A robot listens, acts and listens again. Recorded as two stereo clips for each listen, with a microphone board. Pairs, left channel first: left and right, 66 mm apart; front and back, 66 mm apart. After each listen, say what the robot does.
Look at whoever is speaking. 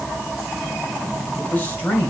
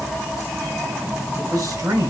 Turn 160° left.
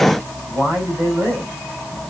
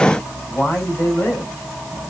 Turn 40° right.
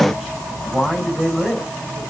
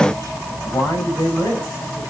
Found it: a man speaking, straight ahead.